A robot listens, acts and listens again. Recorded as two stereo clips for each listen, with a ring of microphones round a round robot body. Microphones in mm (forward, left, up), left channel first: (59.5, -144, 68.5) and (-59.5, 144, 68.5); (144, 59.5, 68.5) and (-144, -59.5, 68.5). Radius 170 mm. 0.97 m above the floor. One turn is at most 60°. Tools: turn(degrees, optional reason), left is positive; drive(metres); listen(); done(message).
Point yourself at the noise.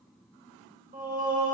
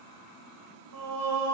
turn(degrees=60, reason="The singing: straight behind.")
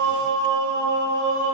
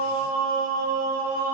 turn(degrees=60, reason="The singing is now 140° left.")
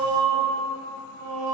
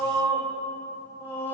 turn(degrees=60, reason="The singing is now 105° left.")
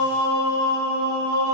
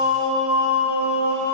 turn(degrees=55, reason="The singing is now 55° left.")
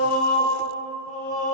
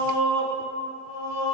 done("Found it: singing, straight ahead, 1 to 2 m away.")